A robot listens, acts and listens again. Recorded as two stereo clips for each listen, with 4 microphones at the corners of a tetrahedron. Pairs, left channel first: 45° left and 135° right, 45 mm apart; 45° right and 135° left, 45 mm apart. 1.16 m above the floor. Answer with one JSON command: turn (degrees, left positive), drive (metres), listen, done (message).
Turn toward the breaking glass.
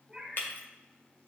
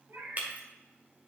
{"turn": 85}
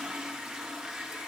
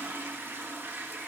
{"done": "Facing where the breaking glass came from. I can't hear it now."}